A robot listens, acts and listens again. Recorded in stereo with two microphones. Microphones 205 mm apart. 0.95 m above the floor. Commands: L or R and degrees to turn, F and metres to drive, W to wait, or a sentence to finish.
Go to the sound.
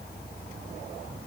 W
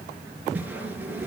R30
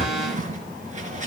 R145
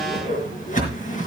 L40
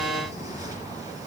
W
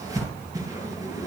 R15
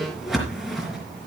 F1.0
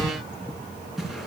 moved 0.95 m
F1.0
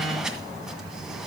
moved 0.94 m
F1.0
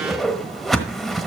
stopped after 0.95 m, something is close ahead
Arrived at the whoosh, straight ahead.